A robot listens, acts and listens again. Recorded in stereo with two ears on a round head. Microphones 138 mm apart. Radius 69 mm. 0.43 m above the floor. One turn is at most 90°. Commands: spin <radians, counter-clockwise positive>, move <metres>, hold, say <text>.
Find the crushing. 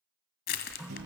spin 1.22
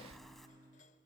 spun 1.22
say Found it: crushing, straight ahead, 1 to 2 m away.